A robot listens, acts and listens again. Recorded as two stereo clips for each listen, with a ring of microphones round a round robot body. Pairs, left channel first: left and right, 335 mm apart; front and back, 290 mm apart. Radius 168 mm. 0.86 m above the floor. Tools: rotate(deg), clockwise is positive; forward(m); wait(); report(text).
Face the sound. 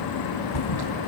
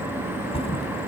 rotate(-70)
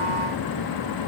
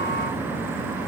report("Facing where the thud came from. I can't hear it now.")